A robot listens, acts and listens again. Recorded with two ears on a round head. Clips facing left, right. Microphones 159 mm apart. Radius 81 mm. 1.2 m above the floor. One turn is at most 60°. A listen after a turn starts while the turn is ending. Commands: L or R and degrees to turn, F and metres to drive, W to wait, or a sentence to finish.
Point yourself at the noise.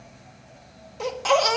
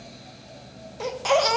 R30
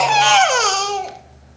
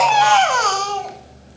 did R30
L25
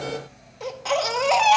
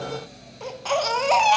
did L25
Found it: a baby crying, straight ahead, under 1 m away.